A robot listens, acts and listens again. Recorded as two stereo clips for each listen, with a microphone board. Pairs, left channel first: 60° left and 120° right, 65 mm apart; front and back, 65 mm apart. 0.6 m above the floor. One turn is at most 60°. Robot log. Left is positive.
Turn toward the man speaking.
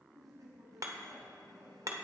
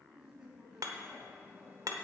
note: The man speaking: 95° right.
cmd yaw -60
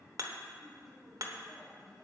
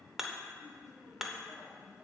note: The man speaking is now 25° right.
cmd yaw -25
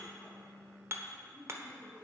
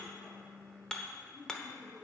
end: Found it: a man speaking, straight ahead, over 4 m away.